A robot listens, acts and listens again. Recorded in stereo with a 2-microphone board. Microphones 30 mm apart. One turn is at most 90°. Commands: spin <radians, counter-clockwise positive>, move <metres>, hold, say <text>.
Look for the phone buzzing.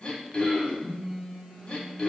spin 0.52
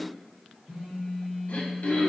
spin -0.61
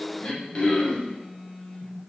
say Found it: a phone buzzing, straight ahead, 1 to 2 m away.